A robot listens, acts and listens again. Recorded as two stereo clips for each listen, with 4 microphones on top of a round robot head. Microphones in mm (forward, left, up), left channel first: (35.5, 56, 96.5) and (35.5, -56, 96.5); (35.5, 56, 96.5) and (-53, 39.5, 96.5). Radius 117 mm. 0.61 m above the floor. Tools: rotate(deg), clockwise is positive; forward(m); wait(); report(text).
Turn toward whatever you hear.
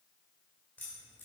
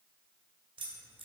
rotate(-165)
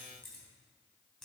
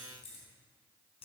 report("Found it: keys jangling, straight ahead.")